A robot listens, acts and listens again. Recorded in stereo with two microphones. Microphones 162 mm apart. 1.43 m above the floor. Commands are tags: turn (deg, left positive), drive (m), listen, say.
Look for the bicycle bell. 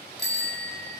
<turn deg="75"/>
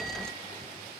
<listen/>
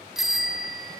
<say>Found it: a bicycle bell, straight ahead.</say>